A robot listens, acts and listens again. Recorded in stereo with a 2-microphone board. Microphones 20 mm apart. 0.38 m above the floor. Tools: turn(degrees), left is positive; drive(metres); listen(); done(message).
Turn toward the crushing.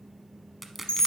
turn(degrees=30)
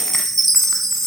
listen()
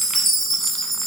listen()
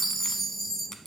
done("I heard crushing, but can't make it out now. It was about 25° right or 145° left.")